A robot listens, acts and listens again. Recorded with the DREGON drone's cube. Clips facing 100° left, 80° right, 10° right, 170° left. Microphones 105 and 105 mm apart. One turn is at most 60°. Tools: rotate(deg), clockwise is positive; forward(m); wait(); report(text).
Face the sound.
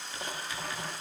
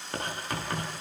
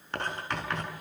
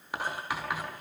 rotate(60)
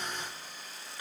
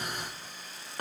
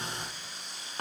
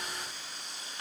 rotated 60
rotate(45)
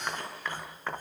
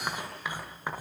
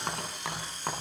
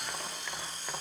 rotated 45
report("Found it: writing, straight ahead.")